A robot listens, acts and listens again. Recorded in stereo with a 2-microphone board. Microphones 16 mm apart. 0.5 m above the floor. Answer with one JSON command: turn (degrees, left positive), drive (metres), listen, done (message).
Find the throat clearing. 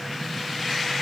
{"listen": true}
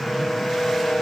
{"listen": true}
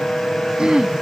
{"turn": -70}
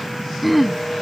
{"done": "Facing the throat clearing."}